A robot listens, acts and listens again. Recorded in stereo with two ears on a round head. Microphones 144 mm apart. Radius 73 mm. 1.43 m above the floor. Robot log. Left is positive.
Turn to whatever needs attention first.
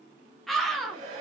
cmd yaw +30
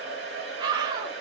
note: So it is at 25° right.
cmd yaw -25
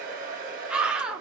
end: Facing the scream.